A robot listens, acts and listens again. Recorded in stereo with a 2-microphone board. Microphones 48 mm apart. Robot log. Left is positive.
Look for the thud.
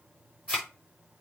cmd yaw +30
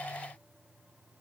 cmd idle
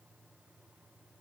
end: I heard a thud, but can't make it out now. It was about 20° right or 140° left.